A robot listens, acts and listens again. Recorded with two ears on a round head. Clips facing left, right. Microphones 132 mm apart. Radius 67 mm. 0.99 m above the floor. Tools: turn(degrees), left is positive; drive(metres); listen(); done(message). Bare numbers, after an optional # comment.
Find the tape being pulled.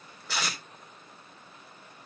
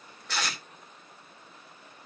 turn(30)
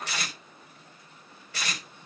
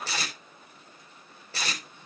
# So it is at 25° right.
turn(-25)
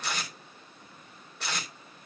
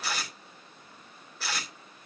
done("Found it: tape being pulled, straight ahead.")